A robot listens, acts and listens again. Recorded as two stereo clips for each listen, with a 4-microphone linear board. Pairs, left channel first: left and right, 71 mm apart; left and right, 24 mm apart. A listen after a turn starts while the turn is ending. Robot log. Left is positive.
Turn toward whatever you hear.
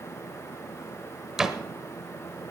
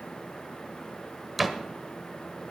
cmd yaw -30
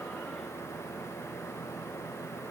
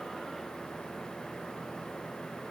cmd idle
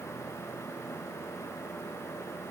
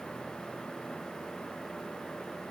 end: I heard a door slam, but can't make it out now. It was about 25° left or 145° right.